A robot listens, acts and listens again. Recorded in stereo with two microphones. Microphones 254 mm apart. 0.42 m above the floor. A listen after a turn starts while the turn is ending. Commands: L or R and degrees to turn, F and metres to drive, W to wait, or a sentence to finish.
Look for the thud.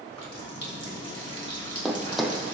L30
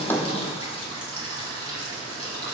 W
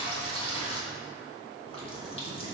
I heard a thud, but can't make it out now. It was about 30° right or 150° left.